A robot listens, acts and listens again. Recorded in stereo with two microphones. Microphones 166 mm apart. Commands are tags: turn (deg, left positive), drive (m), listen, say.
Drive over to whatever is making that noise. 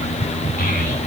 <turn deg="55"/>
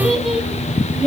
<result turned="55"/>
<drive m="1.0"/>
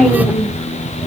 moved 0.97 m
<drive m="1.0"/>
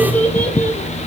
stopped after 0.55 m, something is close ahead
<turn deg="10"/>
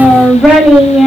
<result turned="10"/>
<say>Something is in my way. I am facing the child speaking but have not reached it.</say>